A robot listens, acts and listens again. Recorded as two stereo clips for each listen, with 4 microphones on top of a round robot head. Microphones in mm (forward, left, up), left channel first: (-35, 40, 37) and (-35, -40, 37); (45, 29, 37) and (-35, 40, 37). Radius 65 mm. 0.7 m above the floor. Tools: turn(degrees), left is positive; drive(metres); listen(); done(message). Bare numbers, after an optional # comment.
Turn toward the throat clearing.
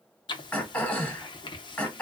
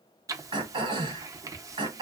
# The throat clearing: 160° left.
turn(160)
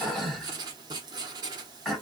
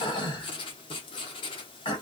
done("Found it: throat clearing, straight ahead, 1 to 2 m away.")